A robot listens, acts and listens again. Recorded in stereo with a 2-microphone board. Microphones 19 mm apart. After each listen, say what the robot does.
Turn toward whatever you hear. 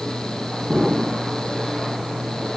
Turn 20° right.
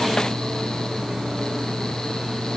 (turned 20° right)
Keep listening.
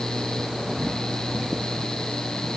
I heard an explosion, but can't make it out now. It was about straight ahead or 140° right.